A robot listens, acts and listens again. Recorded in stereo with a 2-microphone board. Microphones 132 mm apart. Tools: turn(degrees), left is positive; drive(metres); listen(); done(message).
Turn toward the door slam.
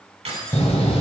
turn(degrees=50)
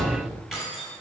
done("Facing the door slam, 1 to 2 m away.")